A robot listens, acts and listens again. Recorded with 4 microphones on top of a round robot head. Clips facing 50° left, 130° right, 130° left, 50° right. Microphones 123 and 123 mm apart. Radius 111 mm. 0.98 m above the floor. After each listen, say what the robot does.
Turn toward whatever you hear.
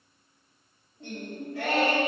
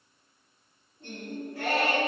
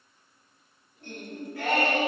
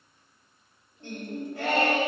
Turn 10° left.
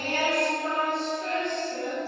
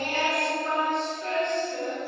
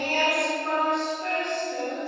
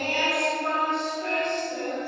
Turn 20° right.
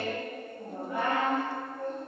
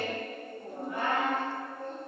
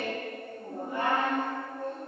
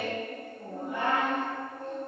Turn 25° right.
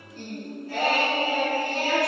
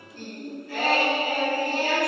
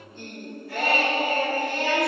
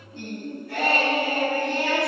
Turn 10° right.
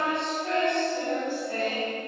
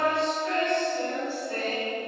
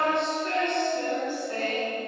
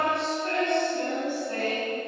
Facing the singing.